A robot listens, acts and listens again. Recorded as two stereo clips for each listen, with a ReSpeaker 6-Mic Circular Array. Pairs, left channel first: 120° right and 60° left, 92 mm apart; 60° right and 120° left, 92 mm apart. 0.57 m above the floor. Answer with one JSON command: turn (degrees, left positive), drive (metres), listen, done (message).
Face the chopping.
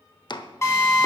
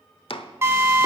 {"turn": -85}
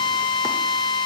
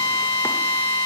{"listen": true}
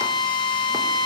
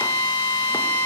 {"listen": true}
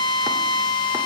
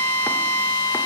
{"done": "Facing where the chopping came from. I can't hear it now."}